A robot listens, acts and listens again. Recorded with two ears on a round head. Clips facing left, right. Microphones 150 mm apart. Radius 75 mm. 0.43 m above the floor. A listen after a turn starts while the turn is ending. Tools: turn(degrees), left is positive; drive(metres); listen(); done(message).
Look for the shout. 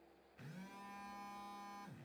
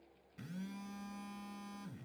listen()
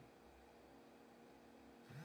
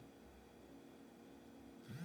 listen()
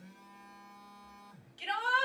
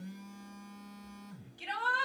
turn(degrees=25)
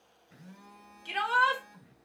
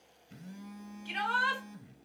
turn(degrees=125)
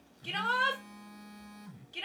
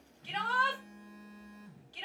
turn(degrees=20)
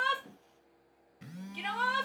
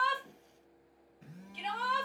done("Found it: a shout, straight ahead, 2 to 4 m away.")